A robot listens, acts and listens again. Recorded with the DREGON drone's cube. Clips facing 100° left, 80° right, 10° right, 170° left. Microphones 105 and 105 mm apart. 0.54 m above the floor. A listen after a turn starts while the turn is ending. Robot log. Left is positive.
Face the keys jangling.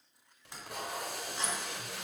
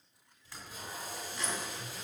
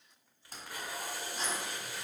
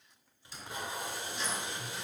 note: The keys jangling: 35° left.
cmd yaw +35
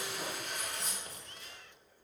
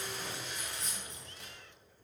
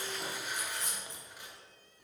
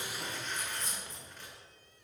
note: The keys jangling is now 15° left.
cmd yaw +15
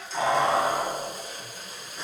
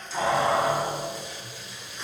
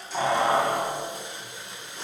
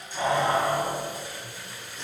note: The keys jangling is now 15° left.
cmd yaw +15
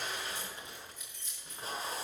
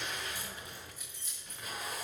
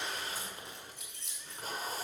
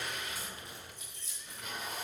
end: Facing the keys jangling, over 4 m away.